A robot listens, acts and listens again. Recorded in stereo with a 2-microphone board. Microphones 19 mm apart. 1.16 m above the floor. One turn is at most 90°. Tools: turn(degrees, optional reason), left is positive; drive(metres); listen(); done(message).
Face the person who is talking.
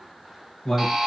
turn(degrees=45, reason="The man speaking: about 45° left or 135° left.")
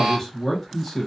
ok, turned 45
done("Facing the man speaking.")